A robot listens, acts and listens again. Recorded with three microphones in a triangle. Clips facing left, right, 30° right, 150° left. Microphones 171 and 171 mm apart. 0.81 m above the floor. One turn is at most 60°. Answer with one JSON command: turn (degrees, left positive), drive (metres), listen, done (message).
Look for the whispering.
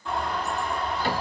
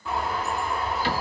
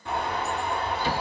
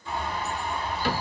{"listen": true}
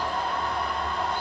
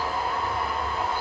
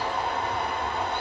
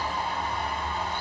{"listen": true}
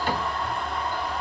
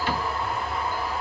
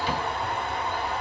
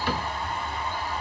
{"done": "I can't make out whispering, only a bird."}